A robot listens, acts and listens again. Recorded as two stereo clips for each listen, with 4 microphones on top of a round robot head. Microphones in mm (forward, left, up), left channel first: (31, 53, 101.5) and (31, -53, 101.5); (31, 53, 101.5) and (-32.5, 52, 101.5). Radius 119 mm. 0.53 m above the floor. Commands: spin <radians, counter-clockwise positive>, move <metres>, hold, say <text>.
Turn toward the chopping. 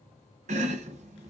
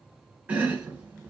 spin -1.83
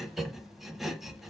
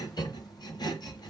say Found it: chopping, straight ahead.